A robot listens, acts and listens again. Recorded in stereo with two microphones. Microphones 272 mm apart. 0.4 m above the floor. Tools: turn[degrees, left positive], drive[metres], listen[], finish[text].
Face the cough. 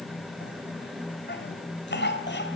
Thought: The cough: about 40° left or 140° left.
Action: turn[40]
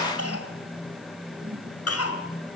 Thought: So it is at 95° left.
Action: turn[95]
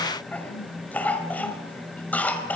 Action: finish[Found it: a cough, straight ahead, 2 to 4 m away.]